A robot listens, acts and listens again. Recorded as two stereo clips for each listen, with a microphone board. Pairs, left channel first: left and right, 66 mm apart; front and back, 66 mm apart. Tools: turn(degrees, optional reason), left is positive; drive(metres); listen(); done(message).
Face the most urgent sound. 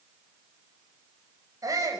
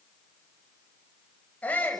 turn(degrees=-65, reason="The shout: 65° right.")
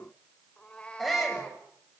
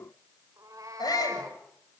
done("Facing the shout.")